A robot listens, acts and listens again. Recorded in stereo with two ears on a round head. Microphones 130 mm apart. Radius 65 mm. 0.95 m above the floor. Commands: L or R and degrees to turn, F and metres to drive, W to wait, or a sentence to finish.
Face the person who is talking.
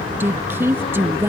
R15
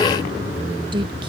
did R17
R150
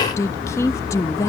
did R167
L20
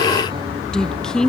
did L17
Found it: a woman speaking, straight ahead.